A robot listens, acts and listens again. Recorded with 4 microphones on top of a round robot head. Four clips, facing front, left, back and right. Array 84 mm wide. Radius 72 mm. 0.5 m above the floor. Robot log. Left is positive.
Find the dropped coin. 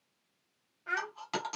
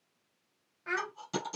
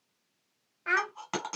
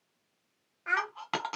note: The dropped coin: 110° right.
cmd yaw -110
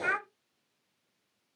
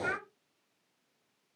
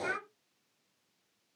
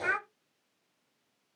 end: I heard a dropped coin from this way, but can't make it out now.